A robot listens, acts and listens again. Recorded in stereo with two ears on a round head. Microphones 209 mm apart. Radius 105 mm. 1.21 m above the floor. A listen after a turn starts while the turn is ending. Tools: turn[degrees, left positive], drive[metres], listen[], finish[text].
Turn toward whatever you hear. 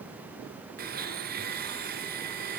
Thought: The blender: about 45° right or 135° right.
Action: turn[-45]
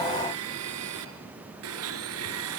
Thought: So it is at 90° right.
Action: turn[-90]
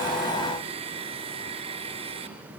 Thought: The blender is now 25° right.
Action: turn[-25]
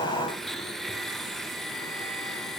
Action: finish[Found it: a blender, straight ahead, 2 to 4 m away.]